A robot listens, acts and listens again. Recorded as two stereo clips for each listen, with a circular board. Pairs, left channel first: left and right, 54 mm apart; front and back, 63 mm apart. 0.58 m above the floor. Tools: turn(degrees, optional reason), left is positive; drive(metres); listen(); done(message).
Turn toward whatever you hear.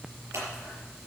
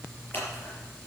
turn(degrees=-60, reason="The scissors: 60° right.")
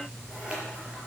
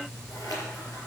turn(degrees=-20, reason="The scissors is now 20° right.")
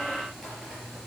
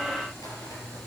listen()
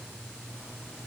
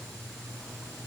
listen()
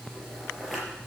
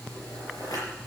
done("Found it: scissors, straight ahead, over 4 m away.")